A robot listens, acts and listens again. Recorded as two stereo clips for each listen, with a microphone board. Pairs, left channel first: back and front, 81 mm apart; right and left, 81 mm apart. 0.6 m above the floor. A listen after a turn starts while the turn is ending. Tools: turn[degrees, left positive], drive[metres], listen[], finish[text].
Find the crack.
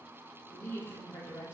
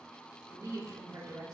Action: listen[]
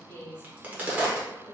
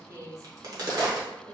Thought: The crack: 65° left.
Action: turn[65]
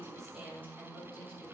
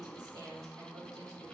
Action: finish[Facing where the crack came from. I can't hear it now.]